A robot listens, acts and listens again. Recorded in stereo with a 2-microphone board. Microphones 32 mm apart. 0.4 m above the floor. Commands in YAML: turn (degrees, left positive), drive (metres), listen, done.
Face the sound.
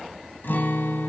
turn: 90
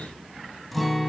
done: "Facing the guitar, 1 to 2 m away."